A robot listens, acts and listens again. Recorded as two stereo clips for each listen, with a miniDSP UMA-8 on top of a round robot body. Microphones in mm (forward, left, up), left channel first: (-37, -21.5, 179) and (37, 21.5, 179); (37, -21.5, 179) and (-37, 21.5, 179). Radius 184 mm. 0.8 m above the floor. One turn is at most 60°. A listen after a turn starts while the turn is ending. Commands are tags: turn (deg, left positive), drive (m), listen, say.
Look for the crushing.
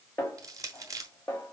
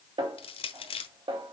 <turn deg="-25"/>
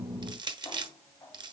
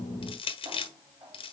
<turn deg="-10"/>
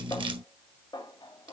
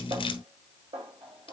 <listen/>
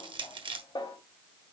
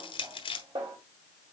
<say>Found it: crushing, straight ahead, 1 to 2 m away.</say>